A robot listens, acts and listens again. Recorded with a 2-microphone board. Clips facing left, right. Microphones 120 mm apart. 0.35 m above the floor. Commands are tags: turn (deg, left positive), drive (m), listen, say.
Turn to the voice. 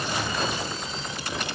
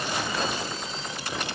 <listen/>
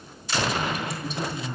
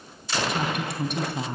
<turn deg="-65"/>
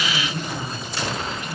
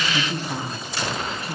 <turn deg="-35"/>
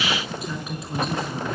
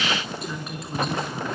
<say>Facing the woman speaking, over 4 m away.</say>